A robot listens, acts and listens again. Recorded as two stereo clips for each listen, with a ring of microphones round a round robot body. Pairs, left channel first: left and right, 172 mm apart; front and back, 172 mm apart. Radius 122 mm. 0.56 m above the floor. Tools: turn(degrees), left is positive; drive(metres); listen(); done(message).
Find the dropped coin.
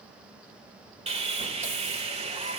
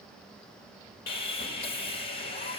listen()
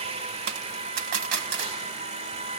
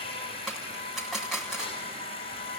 turn(degrees=-90)
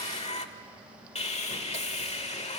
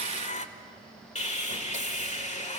done("Facing where the dropped coin came from. I can't hear it now.")